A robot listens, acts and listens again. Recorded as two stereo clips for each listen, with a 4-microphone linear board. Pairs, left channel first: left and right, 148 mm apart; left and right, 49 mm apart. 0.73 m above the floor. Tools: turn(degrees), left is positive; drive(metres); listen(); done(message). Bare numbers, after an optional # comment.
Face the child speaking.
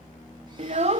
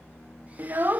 # The child speaking: about 50° right or 130° right.
turn(-50)
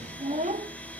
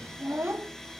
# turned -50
# So it is at 70° right.
turn(-70)
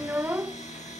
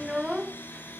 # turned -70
# The child speaking is now 15° right.
turn(-15)
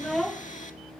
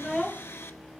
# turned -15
done("Found it: a child speaking, straight ahead.")